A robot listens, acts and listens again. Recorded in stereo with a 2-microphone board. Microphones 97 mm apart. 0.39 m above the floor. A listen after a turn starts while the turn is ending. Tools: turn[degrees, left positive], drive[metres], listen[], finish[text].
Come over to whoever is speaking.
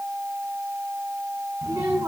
Thought: The child speaking: about 30° right or 150° right.
Action: turn[-30]
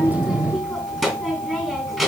Action: drive[1.0]
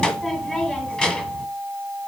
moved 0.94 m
Thought: The child speaking is now 10° left.
Action: turn[10]
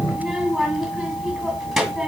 Action: drive[1.0]
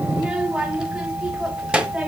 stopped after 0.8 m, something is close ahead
Thought: The child speaking is now 10° right.
Action: turn[-10]
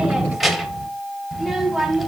Action: finish[Arrived at the child speaking, straight ahead.]